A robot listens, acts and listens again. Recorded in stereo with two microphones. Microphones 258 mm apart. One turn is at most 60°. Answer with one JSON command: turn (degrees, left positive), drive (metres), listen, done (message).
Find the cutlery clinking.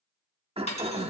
{"turn": 25}
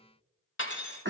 {"turn": 60}
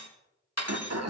{"turn": 60}
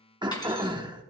{"turn": 15}
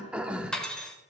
{"done": "Facing the cutlery clinking, 1 to 2 m away."}